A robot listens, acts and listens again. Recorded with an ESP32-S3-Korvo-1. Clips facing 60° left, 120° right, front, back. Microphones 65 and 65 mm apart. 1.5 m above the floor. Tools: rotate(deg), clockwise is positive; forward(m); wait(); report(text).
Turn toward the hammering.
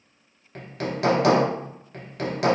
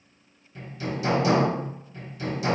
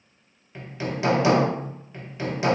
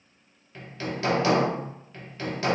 rotate(-70)
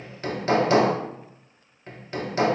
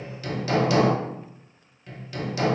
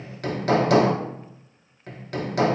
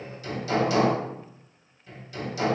rotate(-15)
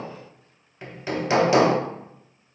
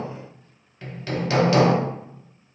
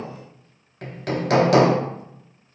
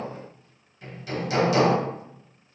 rotate(10)
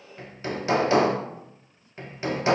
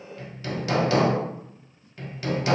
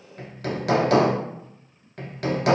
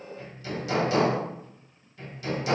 report("Facing the hammering.")